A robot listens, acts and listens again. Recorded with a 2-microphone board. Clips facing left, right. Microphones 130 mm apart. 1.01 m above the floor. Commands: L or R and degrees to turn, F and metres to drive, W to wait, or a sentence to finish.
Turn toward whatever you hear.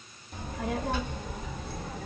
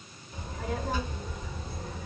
L90
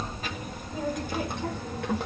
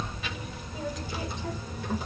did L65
L75
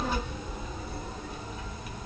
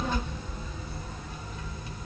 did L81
L20
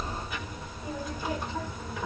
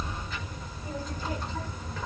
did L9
L10
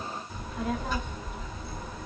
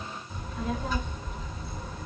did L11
Found it: a child speaking, straight ahead, 1 to 2 m away.